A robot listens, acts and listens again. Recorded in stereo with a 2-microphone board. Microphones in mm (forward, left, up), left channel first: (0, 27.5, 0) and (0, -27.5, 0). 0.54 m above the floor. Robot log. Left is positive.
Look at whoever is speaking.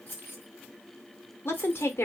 note: The woman speaking: about 50° left or 130° left.
cmd yaw +50
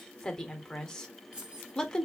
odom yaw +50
note: So it is at 15° left.
cmd yaw +15
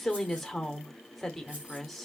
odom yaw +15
end: Facing the woman speaking.